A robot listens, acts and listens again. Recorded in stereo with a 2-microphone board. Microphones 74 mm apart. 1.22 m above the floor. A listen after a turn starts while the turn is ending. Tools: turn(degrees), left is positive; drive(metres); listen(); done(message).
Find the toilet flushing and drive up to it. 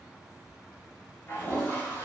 turn(degrees=40)
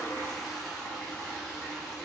drive(metres=1.0)
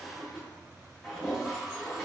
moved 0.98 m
drive(metres=1.0)
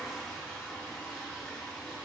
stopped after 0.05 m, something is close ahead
done("Arrived at the toilet flushing, straight ahead.")